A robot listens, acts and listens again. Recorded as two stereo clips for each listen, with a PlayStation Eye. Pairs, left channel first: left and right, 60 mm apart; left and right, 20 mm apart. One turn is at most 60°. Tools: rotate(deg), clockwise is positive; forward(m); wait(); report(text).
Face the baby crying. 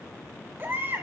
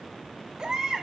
rotate(40)
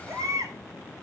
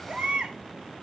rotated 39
rotate(60)
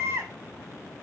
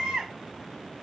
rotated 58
rotate(45)
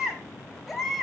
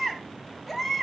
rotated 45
report("Facing the baby crying.")